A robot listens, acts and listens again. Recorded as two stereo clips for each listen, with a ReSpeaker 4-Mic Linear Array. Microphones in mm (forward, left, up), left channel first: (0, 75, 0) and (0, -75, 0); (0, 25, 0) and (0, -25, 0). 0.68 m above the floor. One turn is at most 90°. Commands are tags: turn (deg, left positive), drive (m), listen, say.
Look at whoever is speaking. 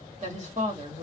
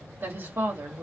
<turn deg="-50"/>
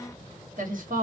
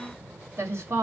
<turn deg="-75"/>
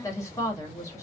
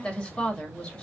<turn deg="20"/>
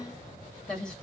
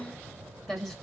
<say>Facing the woman speaking.</say>